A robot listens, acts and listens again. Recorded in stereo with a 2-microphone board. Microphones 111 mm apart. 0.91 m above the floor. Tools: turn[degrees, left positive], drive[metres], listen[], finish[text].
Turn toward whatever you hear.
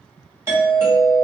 Thought: The doorbell: about 25° right or 155° right.
Action: turn[-25]
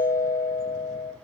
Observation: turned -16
Thought: So it is at 10° right.
Action: turn[-10]
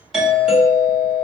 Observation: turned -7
Action: finish[Found it: a doorbell, straight ahead.]